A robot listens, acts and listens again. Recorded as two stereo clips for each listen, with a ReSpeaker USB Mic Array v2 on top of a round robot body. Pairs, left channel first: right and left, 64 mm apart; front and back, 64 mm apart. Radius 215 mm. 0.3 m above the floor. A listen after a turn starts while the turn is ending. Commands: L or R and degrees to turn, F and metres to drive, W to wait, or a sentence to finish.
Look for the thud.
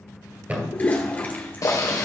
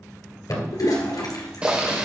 L25
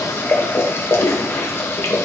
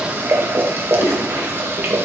I heard a thud from this way, but can't make it out now.